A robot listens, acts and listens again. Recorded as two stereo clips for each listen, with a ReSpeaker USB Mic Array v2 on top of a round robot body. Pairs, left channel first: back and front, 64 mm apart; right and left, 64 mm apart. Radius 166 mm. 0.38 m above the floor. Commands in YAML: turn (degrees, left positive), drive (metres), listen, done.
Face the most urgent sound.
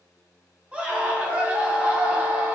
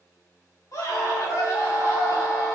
turn: -70
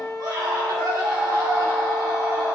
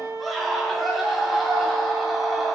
done: "Facing the scream, 2 to 4 m away."